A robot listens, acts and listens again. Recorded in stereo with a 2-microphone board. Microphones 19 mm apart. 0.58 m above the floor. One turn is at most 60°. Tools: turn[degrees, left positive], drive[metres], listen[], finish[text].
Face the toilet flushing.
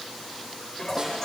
Thought: The toilet flushing: about 25° left or 155° left.
Action: turn[25]
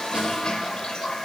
Thought: So it is at 130° left.
Action: turn[60]
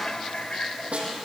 Thought: The toilet flushing is now 85° left.
Action: turn[60]
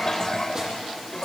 Thought: The toilet flushing is now 30° left.
Action: turn[30]
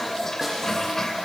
Thought: The toilet flushing is now 20° left.
Action: turn[20]
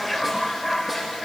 Action: finish[Facing the toilet flushing.]